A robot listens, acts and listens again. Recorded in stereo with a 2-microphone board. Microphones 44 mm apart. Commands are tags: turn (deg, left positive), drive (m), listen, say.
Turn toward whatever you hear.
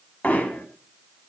<turn deg="30"/>
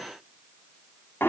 <turn deg="120"/>
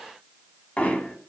<turn deg="35"/>
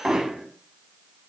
<say>Facing the hammering.</say>